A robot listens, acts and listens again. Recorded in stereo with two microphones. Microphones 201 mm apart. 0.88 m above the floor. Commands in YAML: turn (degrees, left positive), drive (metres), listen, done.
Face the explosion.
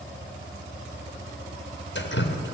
listen: true
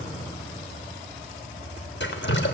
listen: true
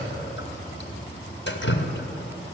done: "I can't make out an explosion to turn to."